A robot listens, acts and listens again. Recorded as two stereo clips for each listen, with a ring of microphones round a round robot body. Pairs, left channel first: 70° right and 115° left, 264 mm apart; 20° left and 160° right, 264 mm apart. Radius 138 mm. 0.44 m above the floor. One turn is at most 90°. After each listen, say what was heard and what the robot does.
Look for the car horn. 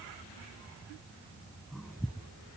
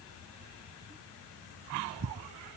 Keep listening.
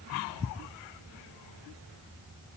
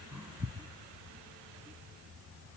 Keep listening.
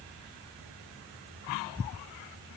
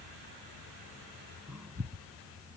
I can't make out a car horn.